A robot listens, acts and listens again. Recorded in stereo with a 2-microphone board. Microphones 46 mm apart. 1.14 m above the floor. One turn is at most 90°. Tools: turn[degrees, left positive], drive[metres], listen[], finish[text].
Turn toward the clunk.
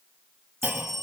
Thought: The clunk: about 35° right or 145° right.
Action: turn[-35]
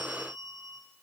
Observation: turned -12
Action: listen[]
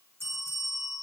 Action: finish[I heard a clunk, but can't make it out now. It was about 20° right or 135° right.]